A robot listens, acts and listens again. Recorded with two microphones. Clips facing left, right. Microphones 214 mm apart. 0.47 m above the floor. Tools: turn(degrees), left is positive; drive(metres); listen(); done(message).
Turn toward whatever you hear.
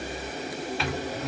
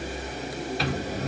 turn(degrees=-40)
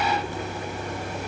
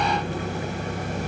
turn(degrees=-90)
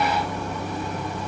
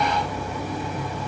turn(degrees=-10)
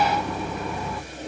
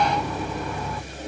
done("Found it: a microwave, straight ahead, under 1 m away.")